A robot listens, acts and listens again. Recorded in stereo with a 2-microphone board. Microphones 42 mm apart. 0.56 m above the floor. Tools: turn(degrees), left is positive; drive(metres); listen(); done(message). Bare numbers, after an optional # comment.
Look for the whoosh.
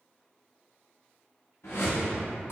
turn(90)
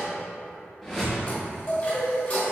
# So it is at 10° right.
turn(-10)
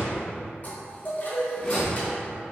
done("Facing the whoosh, 1 to 2 m away.")